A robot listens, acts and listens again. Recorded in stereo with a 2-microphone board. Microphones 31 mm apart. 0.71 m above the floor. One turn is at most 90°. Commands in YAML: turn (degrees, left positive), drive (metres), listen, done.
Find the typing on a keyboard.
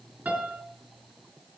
listen: true
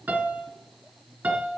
listen: true
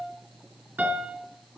done: "I can't make out typing on a keyboard, only a piano."